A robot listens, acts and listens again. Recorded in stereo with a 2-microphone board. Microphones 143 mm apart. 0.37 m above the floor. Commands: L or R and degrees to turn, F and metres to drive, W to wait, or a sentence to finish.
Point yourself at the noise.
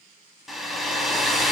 L30
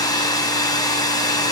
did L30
L150
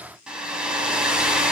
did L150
Facing the hair dryer.